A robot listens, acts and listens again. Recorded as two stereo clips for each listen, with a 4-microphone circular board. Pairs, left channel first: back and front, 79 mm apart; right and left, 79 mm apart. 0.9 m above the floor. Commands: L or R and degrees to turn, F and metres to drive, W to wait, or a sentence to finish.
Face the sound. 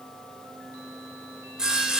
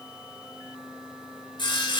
R80
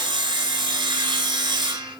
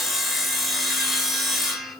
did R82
Facing the sawing.